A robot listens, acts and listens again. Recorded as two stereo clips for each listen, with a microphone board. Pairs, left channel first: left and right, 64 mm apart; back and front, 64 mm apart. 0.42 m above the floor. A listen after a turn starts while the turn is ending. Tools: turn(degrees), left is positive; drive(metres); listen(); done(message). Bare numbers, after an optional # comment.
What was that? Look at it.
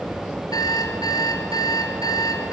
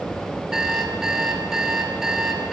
# The alarm clock: 80° left.
turn(80)
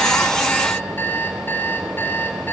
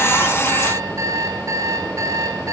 # The alarm clock is now 35° left.
turn(35)
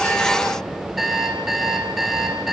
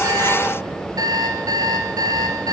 done("Facing the alarm clock.")